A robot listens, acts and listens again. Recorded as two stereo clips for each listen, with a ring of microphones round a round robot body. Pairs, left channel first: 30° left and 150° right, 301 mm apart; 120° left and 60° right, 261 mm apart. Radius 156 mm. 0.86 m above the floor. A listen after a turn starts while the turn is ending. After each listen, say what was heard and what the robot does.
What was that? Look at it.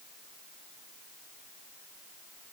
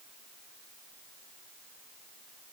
Keep listening.
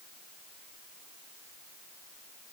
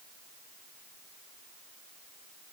Keep listening.
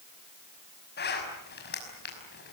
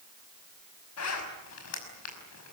The zipper: 90° left. Turn 90° left.
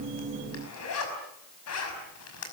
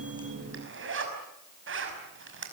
The zipper is now 15° right. Turn 15° right.
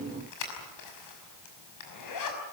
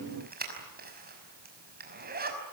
Facing the zipper.